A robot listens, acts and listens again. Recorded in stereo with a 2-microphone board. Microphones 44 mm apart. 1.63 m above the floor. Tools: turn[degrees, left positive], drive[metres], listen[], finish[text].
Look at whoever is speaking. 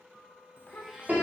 Thought: The child speaking: about 45° left or 135° left.
Action: turn[45]
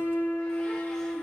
Action: listen[]
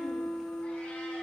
Action: listen[]
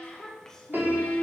Thought: So it is at 10° left.
Action: turn[10]
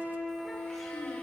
Action: listen[]
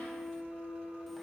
Action: listen[]
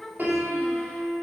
Action: finish[Facing the child speaking, under 1 m away.]